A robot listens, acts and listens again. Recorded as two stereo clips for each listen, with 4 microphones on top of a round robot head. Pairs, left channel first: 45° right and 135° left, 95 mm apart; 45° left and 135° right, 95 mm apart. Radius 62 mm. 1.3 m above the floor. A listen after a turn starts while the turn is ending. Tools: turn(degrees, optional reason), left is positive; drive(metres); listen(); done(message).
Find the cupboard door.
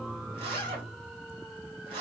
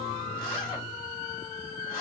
listen()
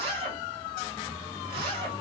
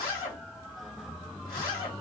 listen()
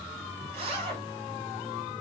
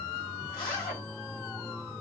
done("I can't make out a cupboard door to turn to.")